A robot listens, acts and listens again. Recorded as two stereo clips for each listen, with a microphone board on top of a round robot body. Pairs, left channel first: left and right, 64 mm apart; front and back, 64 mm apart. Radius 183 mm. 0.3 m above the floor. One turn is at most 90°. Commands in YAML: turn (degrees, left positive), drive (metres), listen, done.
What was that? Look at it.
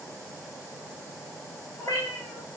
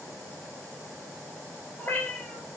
turn: 55
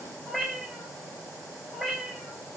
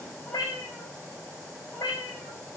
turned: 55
done: "Facing the cat meowing."